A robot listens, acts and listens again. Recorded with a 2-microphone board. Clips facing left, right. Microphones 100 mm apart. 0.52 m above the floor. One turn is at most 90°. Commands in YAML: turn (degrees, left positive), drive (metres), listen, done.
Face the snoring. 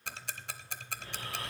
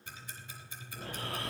turn: -70
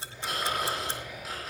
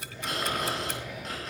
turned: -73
done: "Facing the snoring, over 4 m away."